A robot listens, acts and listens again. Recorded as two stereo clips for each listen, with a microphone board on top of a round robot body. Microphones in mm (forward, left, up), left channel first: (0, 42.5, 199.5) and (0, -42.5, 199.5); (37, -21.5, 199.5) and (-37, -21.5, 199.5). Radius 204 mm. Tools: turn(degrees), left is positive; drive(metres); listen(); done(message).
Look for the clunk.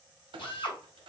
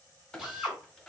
turn(degrees=-85)
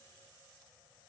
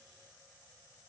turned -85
done("Facing where the clunk came from. I can't hear it now.")